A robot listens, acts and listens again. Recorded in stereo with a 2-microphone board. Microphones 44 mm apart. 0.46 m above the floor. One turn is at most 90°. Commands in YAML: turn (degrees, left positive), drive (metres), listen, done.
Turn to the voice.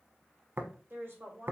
turn: -55
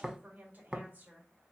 turn: -45
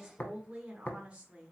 turn: -30
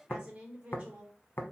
turn: -30
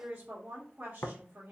turn: -30
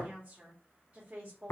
turn: -25
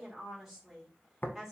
done: "Facing the woman speaking."